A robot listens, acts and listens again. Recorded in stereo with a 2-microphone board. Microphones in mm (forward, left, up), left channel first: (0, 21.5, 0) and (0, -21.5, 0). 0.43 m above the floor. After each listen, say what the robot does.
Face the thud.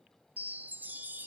Keep listening.
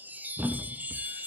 Turn 45° right.
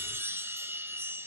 Keep listening.
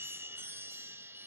I heard a thud, but can't make it out now. It was about straight ahead or 90° right.